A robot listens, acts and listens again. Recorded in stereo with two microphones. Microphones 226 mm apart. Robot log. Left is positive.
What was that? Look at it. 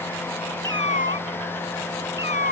note: The cat meowing: about 50° right or 130° right.
cmd yaw -50
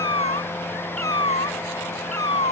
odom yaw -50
note: So it is at 75° right.
cmd yaw -75
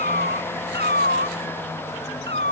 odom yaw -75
note: The cat meowing is now 50° right.
cmd yaw -50
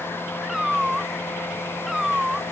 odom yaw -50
end: Found it: a cat meowing, straight ahead.